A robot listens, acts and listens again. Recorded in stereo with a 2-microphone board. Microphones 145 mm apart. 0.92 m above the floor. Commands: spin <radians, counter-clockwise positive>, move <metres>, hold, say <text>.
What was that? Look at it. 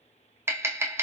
spin -0.26
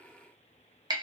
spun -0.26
spin -2.62
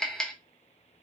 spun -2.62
say Facing the tapping.